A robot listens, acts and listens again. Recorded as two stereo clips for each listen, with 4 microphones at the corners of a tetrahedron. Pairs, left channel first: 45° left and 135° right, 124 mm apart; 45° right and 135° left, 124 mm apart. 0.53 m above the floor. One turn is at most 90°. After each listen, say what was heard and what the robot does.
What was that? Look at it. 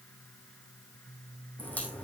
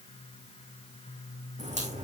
The crack: 120° left. Turn 90° left.
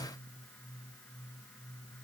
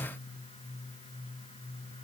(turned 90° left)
Nothing new. It was at 30° left. Turn 30° left.
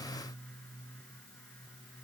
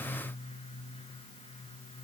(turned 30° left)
I heard a crack from this way, but can't make it out now.